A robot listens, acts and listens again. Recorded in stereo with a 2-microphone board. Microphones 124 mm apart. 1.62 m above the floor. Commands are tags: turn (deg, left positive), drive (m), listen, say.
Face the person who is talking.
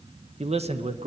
<turn deg="-60"/>
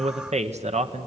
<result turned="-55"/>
<turn deg="-65"/>
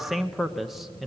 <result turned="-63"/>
<say>Found it: a man speaking, straight ahead.</say>